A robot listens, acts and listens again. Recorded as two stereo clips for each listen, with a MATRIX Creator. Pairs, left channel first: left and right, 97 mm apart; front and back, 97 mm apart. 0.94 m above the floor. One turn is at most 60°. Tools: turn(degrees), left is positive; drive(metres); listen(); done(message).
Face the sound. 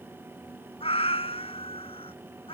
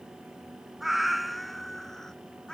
turn(degrees=60)
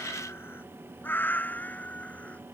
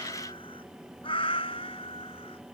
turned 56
turn(degrees=15)
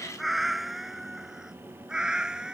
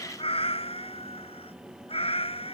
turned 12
done("Found it: a cat meowing, straight ahead.")